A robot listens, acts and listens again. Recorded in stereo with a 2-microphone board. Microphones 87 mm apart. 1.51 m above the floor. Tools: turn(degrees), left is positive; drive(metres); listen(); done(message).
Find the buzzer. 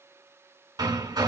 listen()
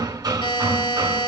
turn(degrees=70)
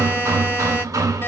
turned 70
listen()
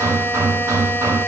listen()
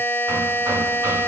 turn(degrees=30)
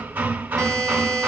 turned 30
done("Found it: a buzzer, straight ahead, 2 to 4 m away.")